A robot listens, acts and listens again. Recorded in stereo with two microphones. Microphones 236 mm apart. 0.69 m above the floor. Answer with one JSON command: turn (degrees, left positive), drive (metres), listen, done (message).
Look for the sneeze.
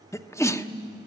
{"turn": 30}
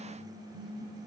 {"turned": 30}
{"listen": true}
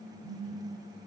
{"done": "I heard a sneeze, but can't make it out now. It was about 20° right or 140° left."}